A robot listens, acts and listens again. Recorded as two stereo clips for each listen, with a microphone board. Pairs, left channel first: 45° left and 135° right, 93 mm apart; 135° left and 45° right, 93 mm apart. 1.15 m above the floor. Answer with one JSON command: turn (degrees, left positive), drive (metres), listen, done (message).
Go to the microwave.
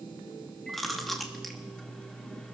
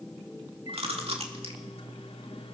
{"turn": 125}
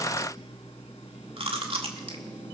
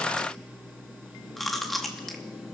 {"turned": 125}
{"turn": 30}
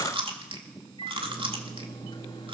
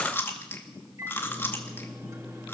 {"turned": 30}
{"turn": 10}
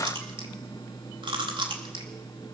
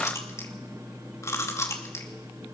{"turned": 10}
{"drive": 1.0}
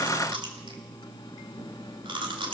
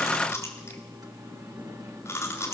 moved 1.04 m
{"drive": 1.0}
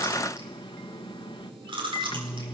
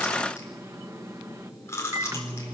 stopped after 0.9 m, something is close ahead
{"turn": 10}
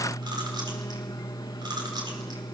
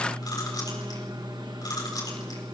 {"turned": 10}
{"done": "Arrived at the microwave, straight ahead."}